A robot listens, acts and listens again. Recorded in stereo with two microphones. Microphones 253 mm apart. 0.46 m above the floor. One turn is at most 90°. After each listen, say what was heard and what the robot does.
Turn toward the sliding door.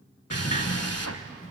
The sliding door: about 30° left or 150° left. Turn 30° left.
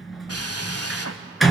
Facing the sliding door.